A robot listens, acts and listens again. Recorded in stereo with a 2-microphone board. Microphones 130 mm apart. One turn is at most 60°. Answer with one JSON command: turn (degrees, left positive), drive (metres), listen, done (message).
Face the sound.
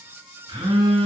{"turn": -35}
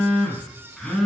{"done": "Found it: a phone buzzing, straight ahead, 2 to 4 m away."}